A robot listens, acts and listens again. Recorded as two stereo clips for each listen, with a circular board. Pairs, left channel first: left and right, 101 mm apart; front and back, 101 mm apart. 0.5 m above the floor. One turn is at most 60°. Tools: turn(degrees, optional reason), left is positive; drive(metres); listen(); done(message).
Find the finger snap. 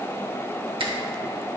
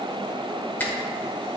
turn(degrees=-60, reason="The finger snap: 70° right.")
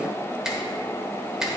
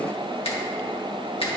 done("Facing the finger snap.")